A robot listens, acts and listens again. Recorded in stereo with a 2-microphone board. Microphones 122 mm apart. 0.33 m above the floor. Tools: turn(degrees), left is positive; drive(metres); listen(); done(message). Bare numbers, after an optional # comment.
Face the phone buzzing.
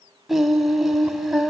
listen()
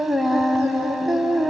listen()
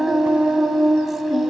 done("I can't make out a phone buzzing, only singing.")